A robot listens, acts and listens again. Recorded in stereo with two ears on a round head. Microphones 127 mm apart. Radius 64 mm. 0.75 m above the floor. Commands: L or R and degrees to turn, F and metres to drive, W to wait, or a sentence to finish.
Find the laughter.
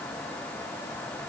W
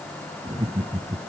R25
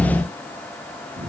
R125
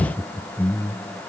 L15
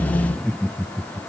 Facing the laughter.